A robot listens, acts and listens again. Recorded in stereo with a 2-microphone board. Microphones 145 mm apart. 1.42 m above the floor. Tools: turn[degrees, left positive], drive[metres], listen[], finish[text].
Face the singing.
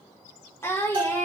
Thought: The singing: about 20° left or 160° left.
Action: turn[20]
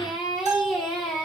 Action: turn[30]
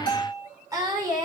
Thought: So it is at 25° right.
Action: turn[-25]
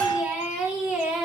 Action: finish[Found it: singing, straight ahead.]